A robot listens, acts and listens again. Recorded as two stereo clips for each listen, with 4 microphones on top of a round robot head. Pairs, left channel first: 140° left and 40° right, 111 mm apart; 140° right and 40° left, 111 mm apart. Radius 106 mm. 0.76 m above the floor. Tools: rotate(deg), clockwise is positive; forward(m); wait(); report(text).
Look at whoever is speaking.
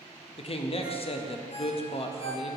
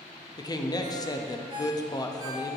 rotate(-170)
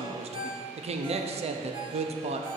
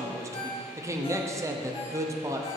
rotate(20)
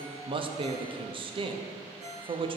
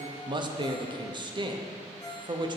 report("Found it: a man speaking, straight ahead.")